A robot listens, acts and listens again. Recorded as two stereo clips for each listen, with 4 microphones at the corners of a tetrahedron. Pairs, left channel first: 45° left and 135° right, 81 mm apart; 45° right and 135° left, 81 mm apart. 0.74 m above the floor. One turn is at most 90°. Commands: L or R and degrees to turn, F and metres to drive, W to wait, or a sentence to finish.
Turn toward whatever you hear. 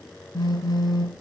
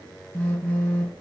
L20
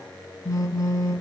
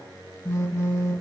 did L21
Found it: a phone buzzing, straight ahead.